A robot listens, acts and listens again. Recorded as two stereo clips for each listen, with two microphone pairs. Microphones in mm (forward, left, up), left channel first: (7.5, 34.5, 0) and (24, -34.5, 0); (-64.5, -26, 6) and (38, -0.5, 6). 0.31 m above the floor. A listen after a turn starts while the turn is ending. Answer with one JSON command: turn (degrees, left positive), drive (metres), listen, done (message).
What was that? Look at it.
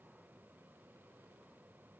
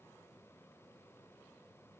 {"listen": true}
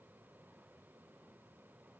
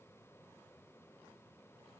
{"listen": true}
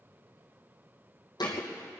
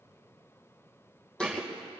{"turn": 115}
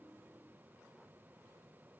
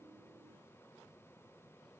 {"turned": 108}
{"done": "Facing where the thud came from. I can't hear it now."}